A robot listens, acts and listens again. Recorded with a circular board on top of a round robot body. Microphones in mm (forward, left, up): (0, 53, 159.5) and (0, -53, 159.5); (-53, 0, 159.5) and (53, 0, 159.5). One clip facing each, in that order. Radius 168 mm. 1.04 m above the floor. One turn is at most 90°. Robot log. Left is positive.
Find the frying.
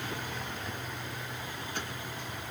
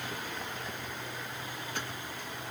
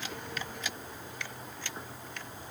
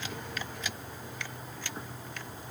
cmd idle
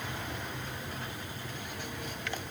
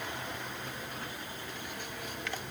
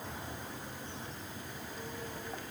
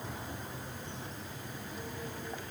cmd idle
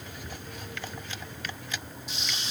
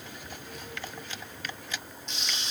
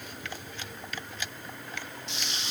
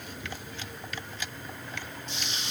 note: The frying: 175° left.
cmd yaw +90
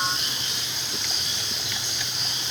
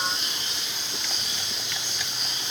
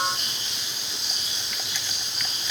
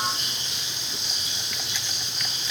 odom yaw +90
note: The frying is now 95° left.
cmd yaw +90
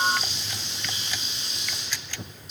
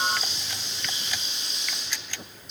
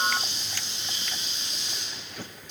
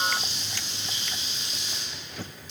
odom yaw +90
end: Facing the frying.